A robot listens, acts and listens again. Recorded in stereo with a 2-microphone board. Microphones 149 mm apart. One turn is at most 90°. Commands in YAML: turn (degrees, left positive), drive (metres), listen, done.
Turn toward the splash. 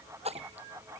turn: -45
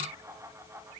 listen: true
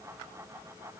done: "I heard a splash, but can't make it out now. It was about straight ahead or 90° right."